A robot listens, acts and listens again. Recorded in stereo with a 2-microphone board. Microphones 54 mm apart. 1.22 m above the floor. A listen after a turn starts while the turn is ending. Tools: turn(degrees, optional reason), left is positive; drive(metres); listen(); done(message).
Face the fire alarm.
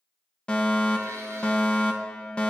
turn(degrees=20, reason="The fire alarm: about 20° left or 160° left.")
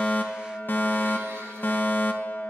turn(degrees=135, reason="So it is at 135° left.")
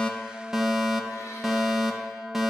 turn(degrees=-10, reason="The fire alarm is now 10° right.")
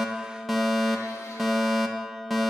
done("Found it: a fire alarm, straight ahead.")